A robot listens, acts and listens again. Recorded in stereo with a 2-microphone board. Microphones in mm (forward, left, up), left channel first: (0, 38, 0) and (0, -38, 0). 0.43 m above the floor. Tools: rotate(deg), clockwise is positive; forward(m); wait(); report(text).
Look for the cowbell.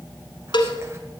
rotate(-70)
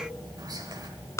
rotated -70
rotate(-40)
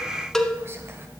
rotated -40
report("Found it: a cowbell, straight ahead, under 1 m away.")